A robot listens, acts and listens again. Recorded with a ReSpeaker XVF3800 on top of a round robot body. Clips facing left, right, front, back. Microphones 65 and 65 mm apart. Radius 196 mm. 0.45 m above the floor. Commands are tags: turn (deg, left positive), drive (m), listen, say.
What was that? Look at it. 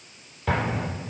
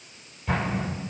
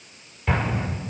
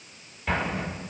<turn deg="95"/>
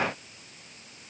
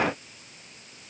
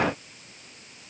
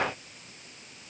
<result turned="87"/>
<say>Facing where the explosion came from. I can't hear it now.</say>